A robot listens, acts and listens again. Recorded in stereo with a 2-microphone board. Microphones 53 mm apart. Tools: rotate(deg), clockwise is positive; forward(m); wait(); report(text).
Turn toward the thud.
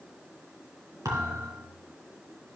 rotate(90)
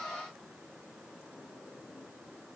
report("Facing where the thud came from. I can't hear it now.")